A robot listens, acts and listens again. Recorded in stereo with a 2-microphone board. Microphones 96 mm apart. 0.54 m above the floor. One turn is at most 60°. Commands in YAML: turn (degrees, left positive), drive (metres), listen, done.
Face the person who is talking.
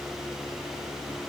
listen: true
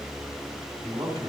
turn: -60
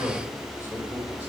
turn: -30
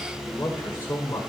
turn: 20
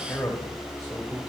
turn: 10
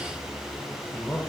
done: "Facing the man speaking, 1 to 2 m away."